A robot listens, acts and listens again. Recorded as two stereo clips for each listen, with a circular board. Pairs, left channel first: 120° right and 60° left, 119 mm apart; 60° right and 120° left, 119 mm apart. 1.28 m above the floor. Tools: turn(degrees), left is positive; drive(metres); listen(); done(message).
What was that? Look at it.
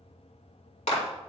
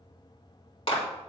turn(degrees=-100)
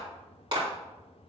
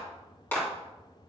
turn(degrees=10)
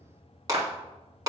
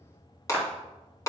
done("Facing the clap, 2 to 4 m away.")